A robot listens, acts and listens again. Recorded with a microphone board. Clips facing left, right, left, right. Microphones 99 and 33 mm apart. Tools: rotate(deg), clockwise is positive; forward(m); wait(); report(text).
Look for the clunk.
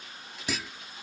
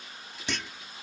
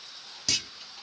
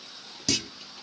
rotate(-30)
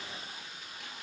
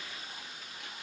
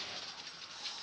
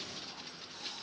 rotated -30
wait()
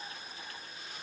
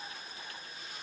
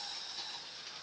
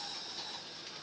report("I heard a clunk, but can't make it out now. It was about 25° right or 145° left.")